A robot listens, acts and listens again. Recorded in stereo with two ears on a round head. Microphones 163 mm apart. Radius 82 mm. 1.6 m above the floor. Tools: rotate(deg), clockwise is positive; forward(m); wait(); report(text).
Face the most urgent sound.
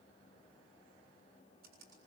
wait()
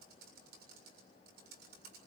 wait()
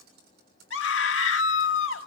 rotate(-90)
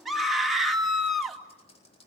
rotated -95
report("Facing the scream, 2 to 4 m away.")